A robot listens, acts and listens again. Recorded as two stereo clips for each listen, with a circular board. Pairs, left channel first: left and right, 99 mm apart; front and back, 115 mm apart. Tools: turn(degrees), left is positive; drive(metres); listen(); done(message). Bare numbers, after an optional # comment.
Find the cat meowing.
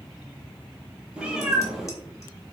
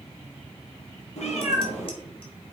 done("Facing the cat meowing.")